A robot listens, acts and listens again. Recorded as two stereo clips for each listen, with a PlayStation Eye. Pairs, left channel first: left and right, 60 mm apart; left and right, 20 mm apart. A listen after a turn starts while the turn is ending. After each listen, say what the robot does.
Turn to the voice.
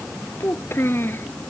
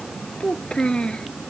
Turn 40° left.
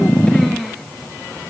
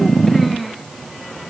Found it: a child speaking, straight ahead.